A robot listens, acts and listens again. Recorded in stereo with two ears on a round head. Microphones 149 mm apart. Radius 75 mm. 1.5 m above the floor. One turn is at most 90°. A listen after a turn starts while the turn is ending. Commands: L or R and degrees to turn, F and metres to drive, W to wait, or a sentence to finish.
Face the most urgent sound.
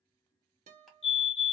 L35
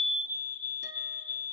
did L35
L10
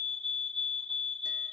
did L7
Facing the fire alarm, 1 to 2 m away.